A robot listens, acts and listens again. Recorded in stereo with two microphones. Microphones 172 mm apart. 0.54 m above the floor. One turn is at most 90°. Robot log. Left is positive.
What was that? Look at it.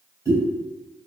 note: The pop: about 15° right or 165° right.
cmd yaw -15
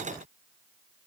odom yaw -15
cmd idle
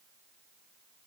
end: I heard a pop, but can't make it out now. It was about straight ahead or 150° right.